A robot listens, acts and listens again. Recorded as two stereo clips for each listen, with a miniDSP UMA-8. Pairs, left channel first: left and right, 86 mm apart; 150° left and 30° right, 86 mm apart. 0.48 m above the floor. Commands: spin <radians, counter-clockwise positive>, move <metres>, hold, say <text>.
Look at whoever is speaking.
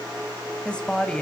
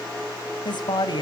spin 2.97
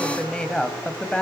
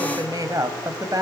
spin 0.17
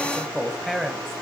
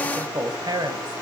say Found it: a woman speaking, straight ahead.